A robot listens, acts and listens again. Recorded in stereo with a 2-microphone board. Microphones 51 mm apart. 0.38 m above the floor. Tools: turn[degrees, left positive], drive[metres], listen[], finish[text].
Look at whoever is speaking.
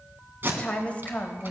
Thought: The woman speaking: about 25° left or 155° left.
Action: turn[25]
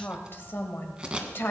Thought: So it is at 120° left.
Action: turn[120]
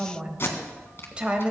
Thought: The woman speaking is now 25° right.
Action: turn[-25]
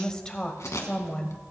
Thought: The woman speaking is now 20° left.
Action: turn[20]
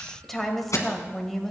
Action: finish[Found it: a woman speaking, straight ahead.]